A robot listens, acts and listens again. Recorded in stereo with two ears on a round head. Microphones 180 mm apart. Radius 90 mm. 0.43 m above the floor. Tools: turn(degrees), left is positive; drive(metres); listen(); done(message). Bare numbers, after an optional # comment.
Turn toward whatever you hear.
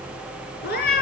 # The cat meowing: about 50° left or 130° left.
turn(50)
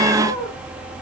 listen()
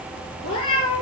# So it is at 80° left.
turn(80)
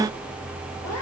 listen()
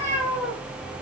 # The cat meowing is now 15° left.
turn(15)
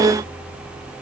listen()
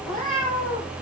done("Facing the cat meowing, over 4 m away.")